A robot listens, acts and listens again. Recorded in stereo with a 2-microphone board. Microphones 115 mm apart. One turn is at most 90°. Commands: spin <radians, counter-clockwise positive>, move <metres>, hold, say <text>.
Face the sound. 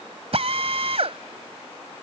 spin -1.05
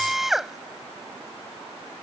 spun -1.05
say Found it: a drill, straight ahead.